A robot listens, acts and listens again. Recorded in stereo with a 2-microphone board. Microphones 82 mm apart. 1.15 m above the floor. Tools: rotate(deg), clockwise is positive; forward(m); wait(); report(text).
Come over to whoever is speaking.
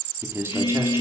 rotate(30)
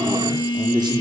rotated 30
rotate(120)
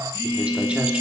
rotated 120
wait()
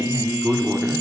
rotate(15)
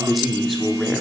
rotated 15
forward(1.0)
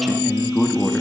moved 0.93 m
forward(1.0)
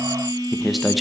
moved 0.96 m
forward(1.0)
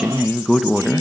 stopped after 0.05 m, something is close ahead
report("I am next to the man speaking.")